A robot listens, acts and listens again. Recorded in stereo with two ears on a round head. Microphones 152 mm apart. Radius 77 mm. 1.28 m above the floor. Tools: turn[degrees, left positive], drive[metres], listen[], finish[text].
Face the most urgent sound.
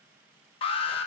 Thought: The alarm: about 35° left or 145° left.
Action: turn[35]
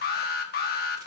Thought: So it is at 105° left.
Action: turn[105]
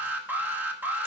Thought: The alarm is now 10° right.
Action: turn[-10]
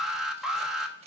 Action: finish[Found it: an alarm, straight ahead, 1 to 2 m away.]